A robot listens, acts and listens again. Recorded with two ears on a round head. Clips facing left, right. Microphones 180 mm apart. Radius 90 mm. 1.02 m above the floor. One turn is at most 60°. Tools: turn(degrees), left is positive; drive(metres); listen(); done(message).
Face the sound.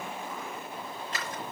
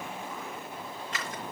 turn(degrees=30)
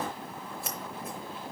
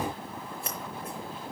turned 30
done("Found it: scissors, straight ahead.")